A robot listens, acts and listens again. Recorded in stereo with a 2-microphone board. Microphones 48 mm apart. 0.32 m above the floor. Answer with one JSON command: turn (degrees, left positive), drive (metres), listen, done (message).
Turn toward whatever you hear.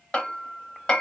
{"turn": 20}
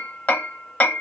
{"turn": 135}
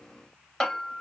{"turn": 15}
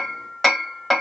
{"done": "Facing the hammering."}